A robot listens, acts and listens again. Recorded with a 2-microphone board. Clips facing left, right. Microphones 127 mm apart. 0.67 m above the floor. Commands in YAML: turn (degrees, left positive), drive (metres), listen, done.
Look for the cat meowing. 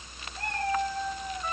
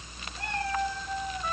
turn: 45
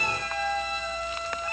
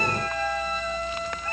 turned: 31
turn: 15
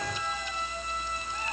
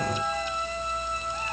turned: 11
done: "Found it: a cat meowing, straight ahead, over 4 m away."